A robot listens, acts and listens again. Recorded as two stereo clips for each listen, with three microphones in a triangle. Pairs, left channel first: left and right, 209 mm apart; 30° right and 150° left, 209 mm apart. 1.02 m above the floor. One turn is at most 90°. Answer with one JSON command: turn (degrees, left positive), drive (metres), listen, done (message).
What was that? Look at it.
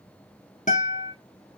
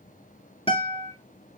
{"turn": 35}
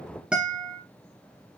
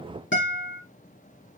{"done": "Facing the guitar."}